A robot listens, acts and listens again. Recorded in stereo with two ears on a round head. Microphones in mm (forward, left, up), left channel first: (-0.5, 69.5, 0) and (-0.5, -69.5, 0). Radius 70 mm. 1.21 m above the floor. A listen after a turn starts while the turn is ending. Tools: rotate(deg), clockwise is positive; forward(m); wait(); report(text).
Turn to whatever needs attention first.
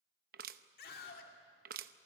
rotate(-65)
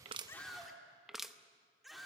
report("Found it: a scream, straight ahead.")